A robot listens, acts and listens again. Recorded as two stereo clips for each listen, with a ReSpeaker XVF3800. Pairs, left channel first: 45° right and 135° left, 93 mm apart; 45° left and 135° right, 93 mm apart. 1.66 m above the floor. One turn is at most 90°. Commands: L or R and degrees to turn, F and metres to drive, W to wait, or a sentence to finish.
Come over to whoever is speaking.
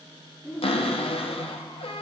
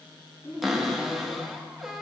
L65
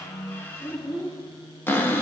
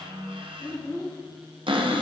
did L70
F1.0
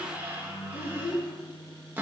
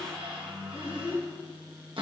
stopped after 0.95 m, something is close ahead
R10
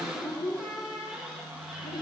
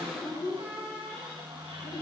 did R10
I am next to the child speaking.